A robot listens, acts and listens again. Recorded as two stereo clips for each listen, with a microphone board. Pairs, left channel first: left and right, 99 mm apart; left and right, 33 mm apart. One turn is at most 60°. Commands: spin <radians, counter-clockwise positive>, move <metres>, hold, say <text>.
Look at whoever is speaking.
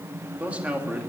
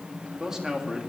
spin -0.26
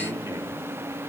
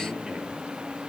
hold
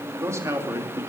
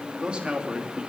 spin -1.05
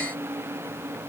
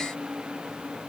spin -1.05
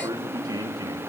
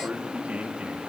spin -0.70
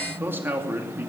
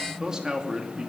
spin -0.35
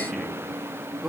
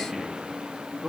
say Facing the man speaking, 2 to 4 m away.